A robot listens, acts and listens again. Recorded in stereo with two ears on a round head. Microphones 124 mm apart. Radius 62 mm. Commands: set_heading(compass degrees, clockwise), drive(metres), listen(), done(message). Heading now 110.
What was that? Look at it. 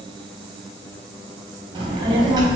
set_heading(140)
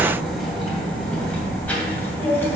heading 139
set_heading(124)
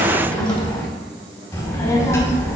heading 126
set_heading(106)
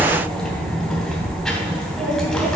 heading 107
done("Facing the child speaking, 2 to 4 m away.")